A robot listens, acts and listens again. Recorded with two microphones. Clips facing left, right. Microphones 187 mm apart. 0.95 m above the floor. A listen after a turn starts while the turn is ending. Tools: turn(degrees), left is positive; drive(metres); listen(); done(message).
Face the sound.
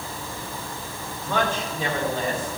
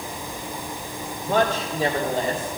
turn(degrees=-35)
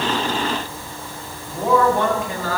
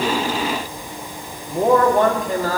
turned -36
turn(degrees=-40)
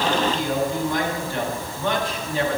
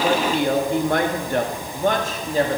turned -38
turn(degrees=-40)
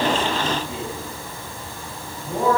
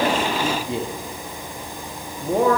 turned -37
turn(degrees=-110)
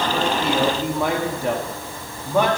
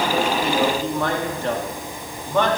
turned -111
turn(degrees=10)
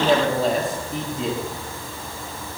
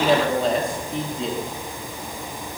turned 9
done("Facing the man speaking.")